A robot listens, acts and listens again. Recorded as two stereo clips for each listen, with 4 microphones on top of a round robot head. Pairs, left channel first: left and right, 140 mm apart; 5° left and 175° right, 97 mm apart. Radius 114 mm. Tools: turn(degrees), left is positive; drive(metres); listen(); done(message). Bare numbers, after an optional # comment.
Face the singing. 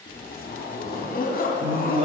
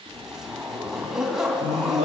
# The singing: 145° right.
turn(-145)
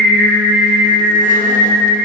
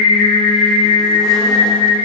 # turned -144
done("Facing the singing, 2 to 4 m away.")